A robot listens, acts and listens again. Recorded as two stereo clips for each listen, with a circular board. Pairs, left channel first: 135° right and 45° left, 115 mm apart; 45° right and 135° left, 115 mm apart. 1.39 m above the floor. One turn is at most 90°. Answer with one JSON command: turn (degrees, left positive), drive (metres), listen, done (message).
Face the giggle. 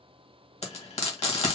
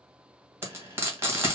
{"listen": true}
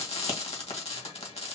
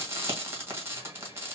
{"listen": true}
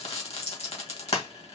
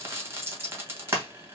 {"done": "I can't make out a giggle, only frying."}